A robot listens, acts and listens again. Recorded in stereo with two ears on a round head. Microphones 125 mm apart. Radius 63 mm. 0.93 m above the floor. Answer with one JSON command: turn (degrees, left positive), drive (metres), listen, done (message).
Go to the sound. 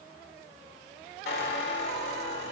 {"turn": 90}
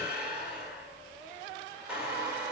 {"turn": -10}
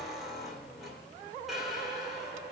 {"drive": 1.0}
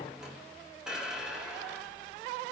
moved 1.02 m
{"drive": 1.0}
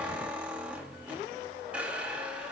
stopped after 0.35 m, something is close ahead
{"turn": -10}
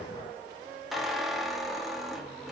{"done": "I am next to the squeak."}